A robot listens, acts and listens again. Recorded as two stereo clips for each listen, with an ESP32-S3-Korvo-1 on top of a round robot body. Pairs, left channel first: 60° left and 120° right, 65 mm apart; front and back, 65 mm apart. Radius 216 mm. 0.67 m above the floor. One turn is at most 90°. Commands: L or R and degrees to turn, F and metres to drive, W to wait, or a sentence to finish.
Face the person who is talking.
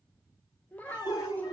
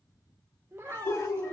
L90
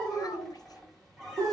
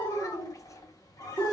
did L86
L40
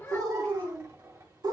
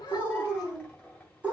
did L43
Facing the child speaking.